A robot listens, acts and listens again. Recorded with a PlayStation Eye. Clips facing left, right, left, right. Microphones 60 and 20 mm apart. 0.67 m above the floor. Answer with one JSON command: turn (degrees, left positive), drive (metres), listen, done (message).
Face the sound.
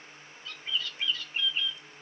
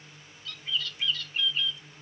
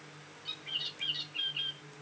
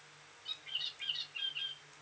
{"turn": 25}
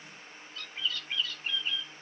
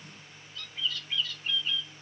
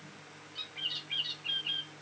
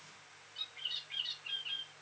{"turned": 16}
{"turn": 140}
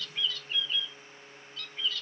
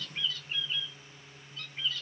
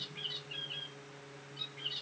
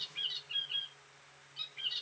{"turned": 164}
{"turn": -25}
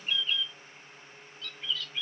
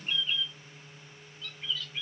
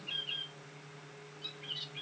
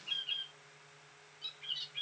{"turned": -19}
{"turn": -10}
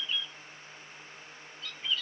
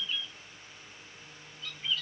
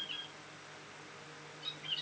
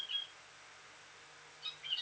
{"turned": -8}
{"done": "Found it: a bird, straight ahead."}